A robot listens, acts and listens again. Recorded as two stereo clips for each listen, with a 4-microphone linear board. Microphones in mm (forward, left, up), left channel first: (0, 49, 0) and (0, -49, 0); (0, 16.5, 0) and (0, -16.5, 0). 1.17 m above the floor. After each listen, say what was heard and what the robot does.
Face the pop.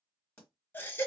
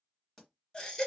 Turn 30° left.
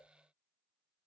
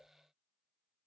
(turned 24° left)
Keep listening.
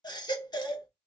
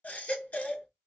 I heard a pop, but can't make it out now. It was about 15° right or 145° left.